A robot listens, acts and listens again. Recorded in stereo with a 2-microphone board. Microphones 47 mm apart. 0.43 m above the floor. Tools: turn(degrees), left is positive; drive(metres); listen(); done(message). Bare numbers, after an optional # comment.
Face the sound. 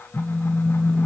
# The phone buzzing: about 40° left or 140° left.
turn(40)
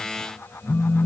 # So it is at 95° left.
turn(95)
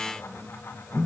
# The phone buzzing is now 10° right.
turn(-10)
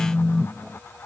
done("Facing the phone buzzing.")